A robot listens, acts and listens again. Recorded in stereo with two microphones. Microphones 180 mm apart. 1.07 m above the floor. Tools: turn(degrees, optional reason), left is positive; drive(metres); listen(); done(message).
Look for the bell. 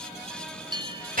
turn(degrees=-25, reason="The bell: about 25° right or 155° right.")
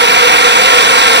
listen()
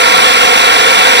listen()
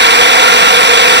done("I heard a bell, but can't make it out now. It was about straight ahead or 130° right.")